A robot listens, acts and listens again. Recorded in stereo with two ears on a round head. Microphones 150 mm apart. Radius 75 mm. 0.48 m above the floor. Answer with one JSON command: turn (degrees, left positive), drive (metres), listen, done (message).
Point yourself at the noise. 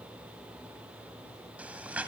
{"turn": -30}
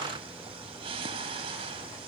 {"turn": -145}
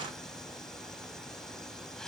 {"done": "Facing the breathing, 1 to 2 m away."}